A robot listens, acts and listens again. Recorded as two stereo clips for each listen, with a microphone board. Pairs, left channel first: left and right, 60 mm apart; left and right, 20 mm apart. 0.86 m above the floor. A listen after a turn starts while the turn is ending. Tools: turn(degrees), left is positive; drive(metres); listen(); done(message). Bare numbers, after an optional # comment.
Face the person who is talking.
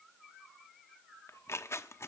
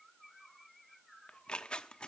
listen()
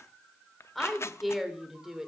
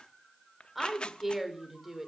turn(-30)
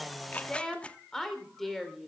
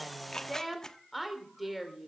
turn(30)
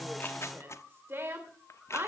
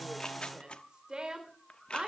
# So it is at 40° right.
turn(-40)
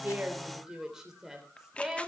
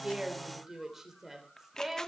# The woman speaking is now 10° right.
turn(-10)
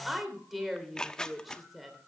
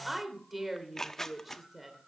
done("Facing the woman speaking.")